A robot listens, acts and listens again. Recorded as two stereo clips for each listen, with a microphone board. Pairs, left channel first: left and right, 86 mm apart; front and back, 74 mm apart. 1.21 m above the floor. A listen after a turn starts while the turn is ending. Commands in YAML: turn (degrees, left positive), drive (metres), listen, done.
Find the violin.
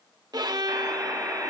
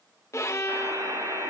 turn: -50
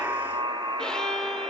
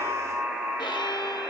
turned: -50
turn: 10
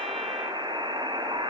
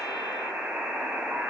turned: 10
listen: true
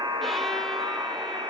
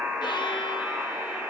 listen: true
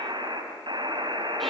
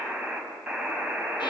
done: "I heard a violin from this way, but can't make it out now."